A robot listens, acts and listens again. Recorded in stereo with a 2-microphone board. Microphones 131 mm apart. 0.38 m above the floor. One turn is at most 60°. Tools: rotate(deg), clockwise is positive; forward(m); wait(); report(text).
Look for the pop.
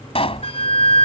rotate(-45)
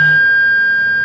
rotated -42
wait()
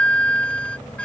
report("I heard a pop, but can't make it out now. It was about 5° left or 90° left.")